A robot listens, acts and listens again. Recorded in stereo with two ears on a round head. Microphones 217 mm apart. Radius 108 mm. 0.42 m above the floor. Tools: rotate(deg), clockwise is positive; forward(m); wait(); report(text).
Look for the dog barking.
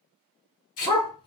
rotate(-20)
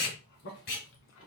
wait()
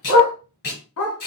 rotate(-105)
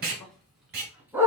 rotate(10)
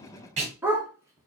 rotate(10)
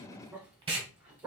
report("Facing the dog barking, 1 to 2 m away.")